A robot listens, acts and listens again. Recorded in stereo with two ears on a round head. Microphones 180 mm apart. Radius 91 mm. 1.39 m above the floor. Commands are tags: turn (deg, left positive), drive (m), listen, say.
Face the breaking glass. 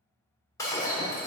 <turn deg="15"/>
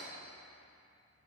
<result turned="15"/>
<listen/>
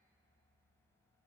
<say>I heard breaking glass, but can't make it out now. It was about straight ahead or 150° left.</say>